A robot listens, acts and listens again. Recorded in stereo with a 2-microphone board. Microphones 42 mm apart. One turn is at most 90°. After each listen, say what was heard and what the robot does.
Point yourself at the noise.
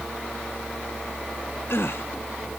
The gasp: about 70° left or 110° left. Turn 70° left.
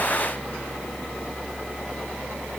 Keep listening.
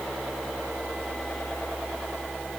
I heard a gasp, but can't make it out now. It was about straight ahead or 40° left.